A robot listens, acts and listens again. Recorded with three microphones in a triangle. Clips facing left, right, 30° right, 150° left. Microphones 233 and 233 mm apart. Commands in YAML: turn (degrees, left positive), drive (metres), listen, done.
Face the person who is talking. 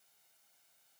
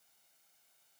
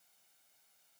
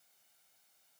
listen: true
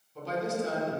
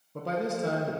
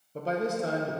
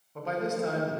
turn: -80
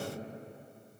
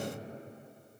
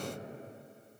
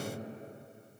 turn: 10
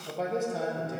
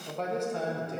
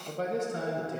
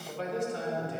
done: "Facing the man speaking, 1 to 2 m away."